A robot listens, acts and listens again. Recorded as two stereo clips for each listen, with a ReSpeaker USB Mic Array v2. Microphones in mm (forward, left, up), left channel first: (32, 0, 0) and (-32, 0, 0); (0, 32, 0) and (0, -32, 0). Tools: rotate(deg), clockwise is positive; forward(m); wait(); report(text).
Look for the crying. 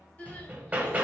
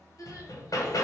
rotate(-65)
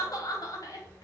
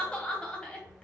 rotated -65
rotate(-15)
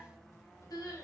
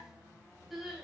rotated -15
report("Facing the crying.")